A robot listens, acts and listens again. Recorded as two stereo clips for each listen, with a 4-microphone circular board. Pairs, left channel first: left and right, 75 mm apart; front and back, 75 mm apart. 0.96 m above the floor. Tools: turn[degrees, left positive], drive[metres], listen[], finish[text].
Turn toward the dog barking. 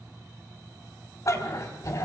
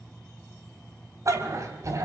Thought: The dog barking: 135° left.
Action: turn[135]
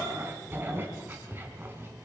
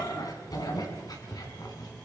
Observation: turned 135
Thought: The dog barking is now 30° right.
Action: turn[-30]
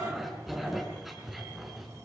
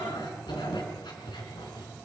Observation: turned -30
Action: finish[Found it: a dog barking, straight ahead, over 4 m away.]